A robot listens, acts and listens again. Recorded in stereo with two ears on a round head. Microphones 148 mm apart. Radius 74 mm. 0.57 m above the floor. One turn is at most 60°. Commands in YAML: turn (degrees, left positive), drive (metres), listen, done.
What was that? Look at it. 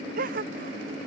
turn: -55
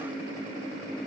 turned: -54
listen: true
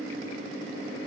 done: "I heard a gasp, but can't make it out now. It was about straight ahead or 70° right."